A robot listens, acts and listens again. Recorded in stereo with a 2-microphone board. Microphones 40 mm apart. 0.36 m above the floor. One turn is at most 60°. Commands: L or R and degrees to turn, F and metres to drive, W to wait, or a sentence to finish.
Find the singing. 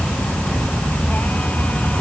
W
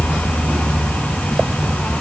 W
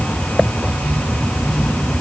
I can't make out singing.